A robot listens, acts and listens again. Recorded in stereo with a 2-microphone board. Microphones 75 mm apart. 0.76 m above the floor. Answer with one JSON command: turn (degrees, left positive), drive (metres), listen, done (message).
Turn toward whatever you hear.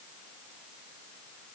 {"listen": true}
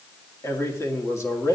{"turn": 40}
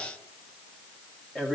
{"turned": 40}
{"done": "Facing the man speaking."}